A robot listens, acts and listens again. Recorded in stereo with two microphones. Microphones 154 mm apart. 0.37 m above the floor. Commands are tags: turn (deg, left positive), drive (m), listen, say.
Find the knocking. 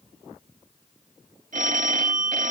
<listen/>
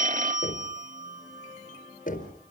<turn deg="65"/>
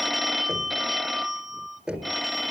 <say>Facing the knocking.</say>